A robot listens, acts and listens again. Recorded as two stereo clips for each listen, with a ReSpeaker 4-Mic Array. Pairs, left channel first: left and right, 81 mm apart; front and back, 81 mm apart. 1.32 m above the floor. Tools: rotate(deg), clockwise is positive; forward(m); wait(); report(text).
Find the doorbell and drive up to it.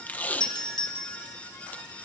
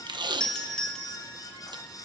rotate(-80)
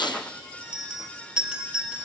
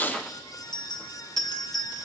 rotate(15)
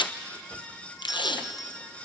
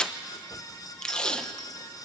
wait()
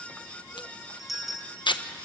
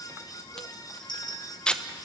forward(1.0)
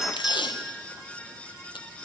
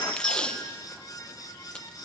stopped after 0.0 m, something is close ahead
report("Blocked. The doorbell is further on, straight ahead.")